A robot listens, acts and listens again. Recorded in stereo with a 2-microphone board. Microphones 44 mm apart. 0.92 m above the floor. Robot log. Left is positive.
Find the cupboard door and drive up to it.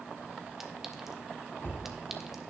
note: The cupboard door: about 50° left or 130° left.
cmd yaw +50
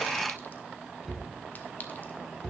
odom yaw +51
cmd fwd 1.0
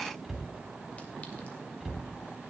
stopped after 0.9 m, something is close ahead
end: Something is in my way. I am facing the cupboard door but have not reached it.